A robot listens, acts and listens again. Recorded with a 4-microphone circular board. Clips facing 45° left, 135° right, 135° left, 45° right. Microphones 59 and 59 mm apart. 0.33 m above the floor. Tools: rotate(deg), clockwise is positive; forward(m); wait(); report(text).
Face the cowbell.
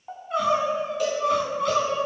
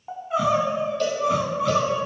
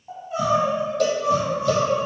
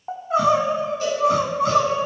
rotate(-125)
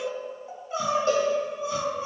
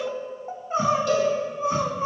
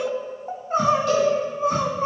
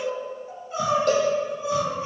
rotate(15)
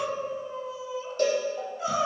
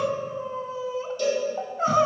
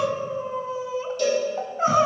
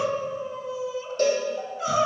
report("Facing the cowbell.")